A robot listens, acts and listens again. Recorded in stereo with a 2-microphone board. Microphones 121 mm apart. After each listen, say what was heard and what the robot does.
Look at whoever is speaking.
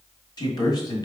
The man speaking: about 35° left or 145° left. Turn 35° left.
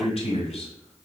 So it is at 105° left. Turn 105° left.
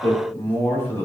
The man speaking is now 20° left. Turn 20° left.
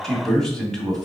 Facing the man speaking.